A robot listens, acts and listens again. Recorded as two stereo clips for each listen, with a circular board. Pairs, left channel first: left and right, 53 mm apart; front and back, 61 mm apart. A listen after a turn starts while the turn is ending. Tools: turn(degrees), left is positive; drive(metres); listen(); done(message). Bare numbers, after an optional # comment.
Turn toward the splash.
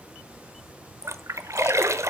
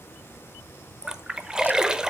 # The splash: 105° right.
turn(-105)
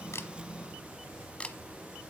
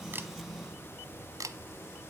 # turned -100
done("Facing where the splash came from. I can't hear it now.")